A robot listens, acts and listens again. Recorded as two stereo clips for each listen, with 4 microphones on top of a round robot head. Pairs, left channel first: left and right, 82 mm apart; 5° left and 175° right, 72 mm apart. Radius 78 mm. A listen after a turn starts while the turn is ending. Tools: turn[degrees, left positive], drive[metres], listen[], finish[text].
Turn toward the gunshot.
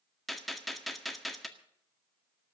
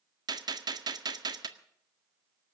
Thought: The gunshot: straight behind.
Action: turn[180]
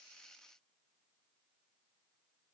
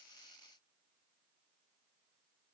Action: finish[I heard a gunshot from this way, but can't make it out now.]